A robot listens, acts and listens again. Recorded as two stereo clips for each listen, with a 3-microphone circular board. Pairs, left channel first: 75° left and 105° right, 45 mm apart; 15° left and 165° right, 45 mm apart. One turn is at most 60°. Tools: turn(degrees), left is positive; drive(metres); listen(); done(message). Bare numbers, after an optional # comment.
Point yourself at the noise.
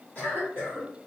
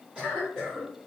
# The cough: 125° left.
turn(60)
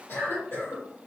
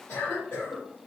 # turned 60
# The cough is now 70° left.
turn(60)
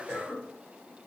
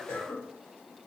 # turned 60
# The cough is now 20° left.
turn(20)
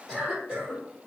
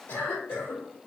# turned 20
done("Found it: a cough, straight ahead.")